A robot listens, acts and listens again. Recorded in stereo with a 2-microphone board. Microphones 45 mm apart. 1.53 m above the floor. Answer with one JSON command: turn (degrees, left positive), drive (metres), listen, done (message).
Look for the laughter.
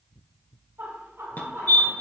{"turn": -90}
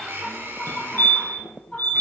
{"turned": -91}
{"turn": 15}
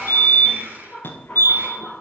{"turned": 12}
{"turn": 10}
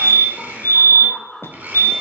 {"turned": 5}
{"done": "Found it: laughter, straight ahead, over 4 m away."}